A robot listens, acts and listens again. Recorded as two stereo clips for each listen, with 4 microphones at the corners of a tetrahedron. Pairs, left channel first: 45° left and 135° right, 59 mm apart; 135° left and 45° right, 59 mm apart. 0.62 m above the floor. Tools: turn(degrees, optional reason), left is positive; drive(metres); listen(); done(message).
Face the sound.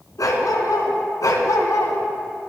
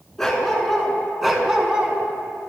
turn(degrees=30, reason="The dog barking: 30° left.")
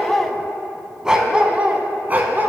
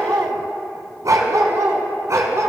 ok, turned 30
turn(degrees=-80, reason="The dog barking is now 80° right.")
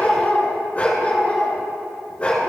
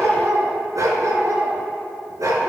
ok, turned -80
turn(degrees=-20, reason="The dog barking is now 20° right.")
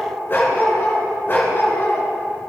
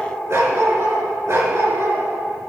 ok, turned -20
done("Facing the dog barking.")